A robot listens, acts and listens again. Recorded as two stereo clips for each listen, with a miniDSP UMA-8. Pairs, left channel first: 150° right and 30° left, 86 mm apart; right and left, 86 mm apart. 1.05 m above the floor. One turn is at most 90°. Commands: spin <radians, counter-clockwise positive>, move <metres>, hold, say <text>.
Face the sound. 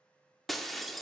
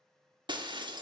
spin 1.57
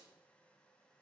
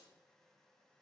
spin 0.52
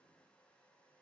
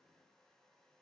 say Facing where the breaking glass came from. I can't hear it now.